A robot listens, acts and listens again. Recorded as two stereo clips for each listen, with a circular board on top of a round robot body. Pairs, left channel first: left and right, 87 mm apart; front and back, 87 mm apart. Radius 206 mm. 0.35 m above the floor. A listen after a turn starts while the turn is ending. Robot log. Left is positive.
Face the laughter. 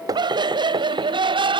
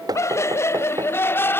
note: The laughter: 65° right.
cmd yaw -65
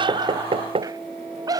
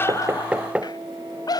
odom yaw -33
note: The laughter is now 45° right.
cmd yaw -45
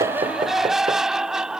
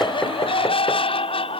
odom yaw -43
end: Found it: laughter, straight ahead.